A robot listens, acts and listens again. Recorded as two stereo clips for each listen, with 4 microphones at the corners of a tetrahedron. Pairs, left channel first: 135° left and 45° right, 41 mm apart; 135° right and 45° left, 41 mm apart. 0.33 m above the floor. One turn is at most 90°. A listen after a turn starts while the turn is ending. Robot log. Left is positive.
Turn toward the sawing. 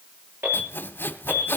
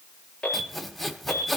note: The sawing: 135° left.
cmd yaw +90
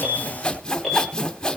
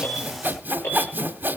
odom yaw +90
note: The sawing is now 65° left.
cmd yaw +65
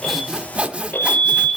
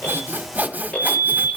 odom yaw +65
end: Found it: sawing, straight ahead.